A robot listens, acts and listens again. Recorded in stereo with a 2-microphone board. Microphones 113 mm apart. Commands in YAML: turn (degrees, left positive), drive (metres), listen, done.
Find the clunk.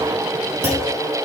turn: -20
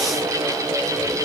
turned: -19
listen: true
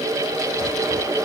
done: "I heard a clunk, but can't make it out now. It was about straight ahead or 145° right."